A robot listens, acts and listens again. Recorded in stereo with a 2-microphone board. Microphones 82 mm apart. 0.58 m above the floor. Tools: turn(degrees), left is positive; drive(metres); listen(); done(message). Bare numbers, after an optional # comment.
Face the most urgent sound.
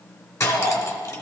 # The shout: about 65° left or 115° left.
turn(65)
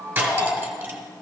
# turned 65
# So it is at 40° left.
turn(40)
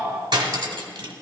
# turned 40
listen()
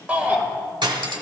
# The shout is now 15° right.
turn(-15)
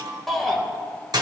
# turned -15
done("Facing the shout.")